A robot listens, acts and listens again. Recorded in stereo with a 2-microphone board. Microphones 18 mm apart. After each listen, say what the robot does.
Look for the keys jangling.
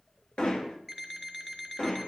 Keep listening.
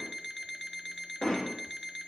Keep listening.
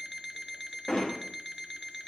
I can't make out keys jangling, only an alarm clock and hammering.